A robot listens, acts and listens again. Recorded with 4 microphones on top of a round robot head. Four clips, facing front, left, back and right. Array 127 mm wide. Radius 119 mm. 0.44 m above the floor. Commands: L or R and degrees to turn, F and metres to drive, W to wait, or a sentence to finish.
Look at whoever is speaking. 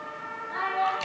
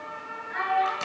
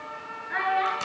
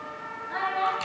R150
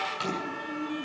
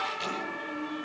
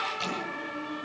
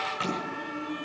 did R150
W
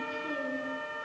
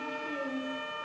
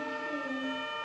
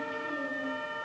W
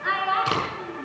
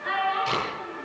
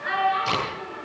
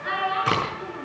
Facing the child speaking.